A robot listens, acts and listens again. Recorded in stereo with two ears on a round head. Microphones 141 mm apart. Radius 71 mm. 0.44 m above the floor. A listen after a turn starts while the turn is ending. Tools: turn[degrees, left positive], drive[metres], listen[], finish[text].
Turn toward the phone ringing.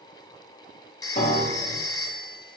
Thought: The phone ringing: about 25° left or 155° left.
Action: turn[25]
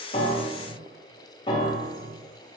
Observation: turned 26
Action: listen[]
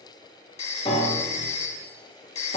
Thought: So it is at 125° left.
Action: turn[125]
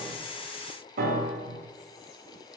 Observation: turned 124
Action: listen[]
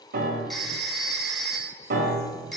Action: finish[Facing the phone ringing, 1 to 2 m away.]